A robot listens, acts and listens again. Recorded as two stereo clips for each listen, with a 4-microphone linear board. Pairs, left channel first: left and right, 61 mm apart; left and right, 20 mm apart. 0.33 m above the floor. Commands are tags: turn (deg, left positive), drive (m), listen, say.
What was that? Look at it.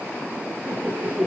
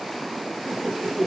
<turn deg="-20"/>
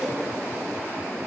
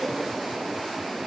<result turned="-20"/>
<listen/>
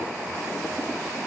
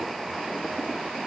<listen/>
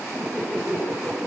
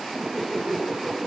<turn deg="-30"/>
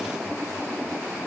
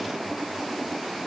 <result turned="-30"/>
<listen/>
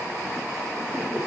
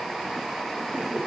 <turn deg="20"/>
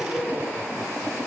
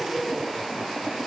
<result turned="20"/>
<say>Found it: laughter, straight ahead.</say>